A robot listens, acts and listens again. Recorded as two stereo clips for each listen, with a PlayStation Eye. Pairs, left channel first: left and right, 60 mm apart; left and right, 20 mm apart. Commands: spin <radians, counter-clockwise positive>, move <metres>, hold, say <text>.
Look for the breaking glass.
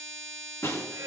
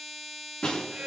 spin 0.96
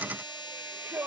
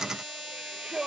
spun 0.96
hold
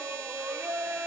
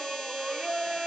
say I heard breaking glass, but can't make it out now. It was about straight ahead or 70° left.